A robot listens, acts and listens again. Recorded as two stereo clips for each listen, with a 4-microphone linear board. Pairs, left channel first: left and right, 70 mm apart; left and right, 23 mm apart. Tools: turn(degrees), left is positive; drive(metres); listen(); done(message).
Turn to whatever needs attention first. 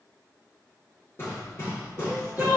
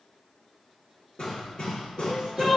turn(degrees=-25)
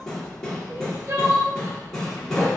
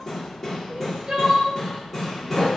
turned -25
turn(degrees=-125)
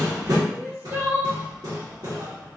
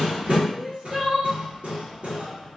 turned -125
turn(degrees=-35)
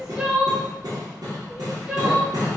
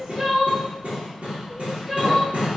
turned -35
turn(degrees=-10)
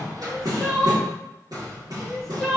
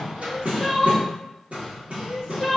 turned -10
done("Found it: crying, straight ahead.")